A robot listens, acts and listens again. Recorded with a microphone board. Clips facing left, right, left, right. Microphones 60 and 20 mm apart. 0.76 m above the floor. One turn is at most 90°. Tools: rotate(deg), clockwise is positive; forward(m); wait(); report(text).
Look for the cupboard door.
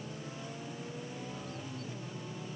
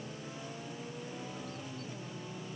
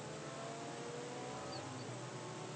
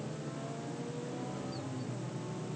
wait()
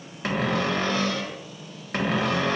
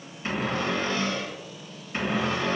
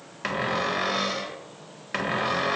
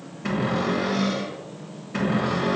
rotate(-90)
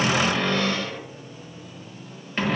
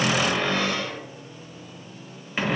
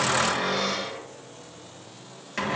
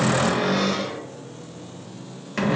report("Found it: a cupboard door, straight ahead.")